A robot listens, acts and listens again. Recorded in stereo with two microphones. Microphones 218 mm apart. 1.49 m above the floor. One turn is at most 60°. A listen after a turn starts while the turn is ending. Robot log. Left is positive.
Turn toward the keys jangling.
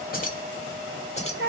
note: The keys jangling: about 25° left or 155° left.
cmd yaw +25
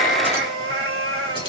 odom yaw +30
cmd idle
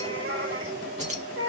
note: So it is at 30° right.
cmd yaw -30
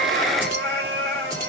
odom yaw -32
cmd idle
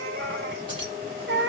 note: The keys jangling is now 20° right.
cmd yaw -20
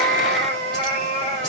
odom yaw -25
cmd idle
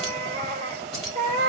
end: Found it: keys jangling, straight ahead.